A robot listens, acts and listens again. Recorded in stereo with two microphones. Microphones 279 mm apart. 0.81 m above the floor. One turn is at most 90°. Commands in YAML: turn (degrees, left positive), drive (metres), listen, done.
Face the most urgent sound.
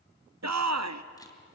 turn: -70
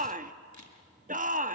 turn: -30
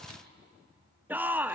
done: "Found it: a shout, straight ahead."